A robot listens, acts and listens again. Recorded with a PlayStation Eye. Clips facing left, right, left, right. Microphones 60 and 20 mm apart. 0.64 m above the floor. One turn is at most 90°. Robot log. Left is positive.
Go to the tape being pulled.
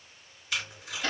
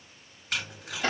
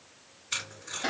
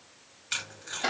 note: The tape being pulled: about 50° right or 130° right.
cmd yaw -50
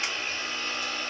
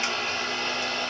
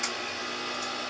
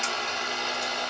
cmd idle
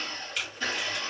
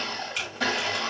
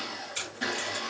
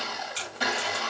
note: So it is at 10° right.
cmd yaw -10
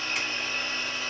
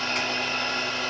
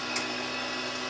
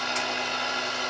cmd idle
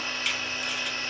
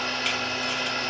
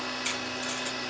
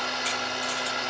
cmd idle
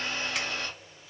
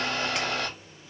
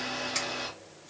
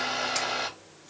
end: Facing where the tape being pulled came from. I can't hear it now. I did not reach it.